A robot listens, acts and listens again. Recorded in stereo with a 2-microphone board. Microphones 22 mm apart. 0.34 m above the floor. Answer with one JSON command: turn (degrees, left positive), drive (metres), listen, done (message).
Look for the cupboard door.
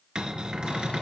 {"turn": -45}
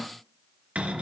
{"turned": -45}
{"turn": -85}
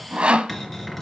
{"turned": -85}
{"turn": 15}
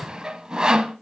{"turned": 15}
{"listen": true}
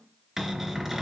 {"done": "Facing the cupboard door."}